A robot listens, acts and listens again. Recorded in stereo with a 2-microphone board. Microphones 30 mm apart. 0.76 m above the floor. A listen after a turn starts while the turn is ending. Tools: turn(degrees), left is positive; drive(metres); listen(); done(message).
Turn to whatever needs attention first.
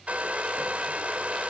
listen()
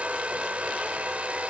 listen()
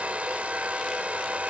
done("I can't make out anything urgent, only a hair dryer.")